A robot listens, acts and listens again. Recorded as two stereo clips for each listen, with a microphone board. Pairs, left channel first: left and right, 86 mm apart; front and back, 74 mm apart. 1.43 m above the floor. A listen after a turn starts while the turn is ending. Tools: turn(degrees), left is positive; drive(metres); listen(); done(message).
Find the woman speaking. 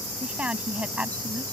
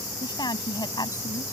turn(degrees=-15)
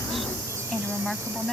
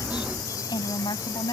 done("Facing the woman speaking.")